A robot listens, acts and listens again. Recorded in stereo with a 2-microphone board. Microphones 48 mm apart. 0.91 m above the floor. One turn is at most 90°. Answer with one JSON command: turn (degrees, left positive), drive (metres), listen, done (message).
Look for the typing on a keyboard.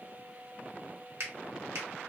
{"listen": true}
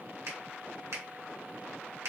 {"listen": true}
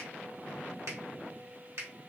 {"done": "I can't make out typing on a keyboard, only a finger snap."}